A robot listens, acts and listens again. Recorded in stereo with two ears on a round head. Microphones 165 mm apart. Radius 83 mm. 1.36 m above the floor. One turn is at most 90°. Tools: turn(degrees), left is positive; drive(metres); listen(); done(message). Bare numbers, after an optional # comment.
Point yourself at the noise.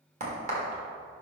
# The crack: about 40° right or 140° right.
turn(-40)
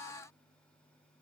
listen()
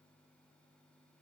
done("I heard a crack, but can't make it out now. It was about straight ahead or 100° right.")